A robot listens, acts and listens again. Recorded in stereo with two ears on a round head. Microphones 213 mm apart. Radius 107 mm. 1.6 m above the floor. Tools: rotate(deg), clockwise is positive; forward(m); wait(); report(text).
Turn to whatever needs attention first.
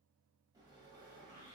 wait()
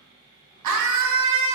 rotate(90)
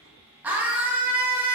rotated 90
report("Facing the scream.")